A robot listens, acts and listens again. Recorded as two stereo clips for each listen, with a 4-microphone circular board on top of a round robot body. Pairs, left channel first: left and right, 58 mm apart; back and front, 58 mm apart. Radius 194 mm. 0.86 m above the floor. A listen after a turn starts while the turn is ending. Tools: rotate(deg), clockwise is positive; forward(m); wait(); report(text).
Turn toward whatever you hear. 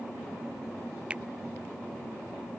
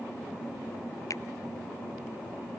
rotate(160)
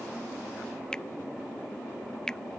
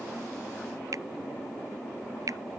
rotate(-15)
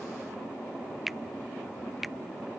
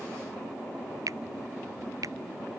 report("Found it: a finger snap, straight ahead.")